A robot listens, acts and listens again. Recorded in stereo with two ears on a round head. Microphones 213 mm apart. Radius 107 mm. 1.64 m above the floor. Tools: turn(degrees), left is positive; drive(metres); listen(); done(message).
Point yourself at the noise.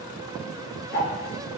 turn(degrees=45)
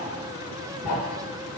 turn(degrees=90)
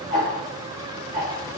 turn(degrees=-30)
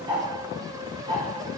turn(degrees=-15)
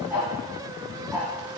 done("Found it: ticking, straight ahead.")